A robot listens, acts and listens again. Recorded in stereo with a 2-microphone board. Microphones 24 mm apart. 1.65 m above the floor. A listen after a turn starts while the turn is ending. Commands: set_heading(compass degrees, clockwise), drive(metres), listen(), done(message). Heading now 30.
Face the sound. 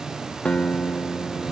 set_heading(335)
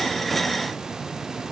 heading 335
listen()
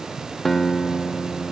done("Facing the guitar.")